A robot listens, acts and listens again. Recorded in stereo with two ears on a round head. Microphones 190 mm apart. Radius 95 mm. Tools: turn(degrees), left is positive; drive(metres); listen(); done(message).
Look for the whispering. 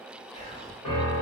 turn(degrees=30)
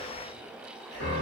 listen()
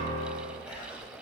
done("Facing the whispering.")